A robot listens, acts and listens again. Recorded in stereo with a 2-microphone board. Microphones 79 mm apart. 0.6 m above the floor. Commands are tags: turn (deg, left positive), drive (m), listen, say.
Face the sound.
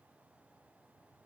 <listen/>
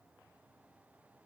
<listen/>
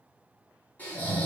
<turn deg="20"/>
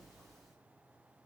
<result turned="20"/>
<listen/>
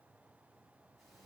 <listen/>
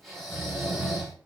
<say>Found it: snoring, straight ahead, 1 to 2 m away.</say>